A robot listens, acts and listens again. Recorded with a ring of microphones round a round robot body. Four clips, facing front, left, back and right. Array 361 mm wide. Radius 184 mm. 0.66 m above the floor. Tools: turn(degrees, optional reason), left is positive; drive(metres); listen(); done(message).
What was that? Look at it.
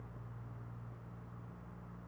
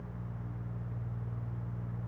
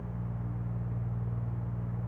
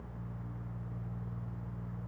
listen()
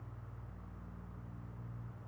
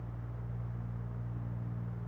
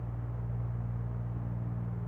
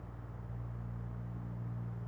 listen()
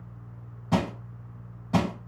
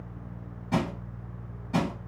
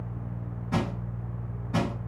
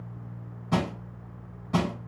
turn(degrees=-20, reason="The crushing: 20° right.")
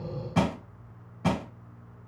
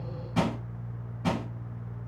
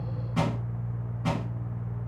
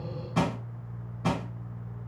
done("Facing the crushing.")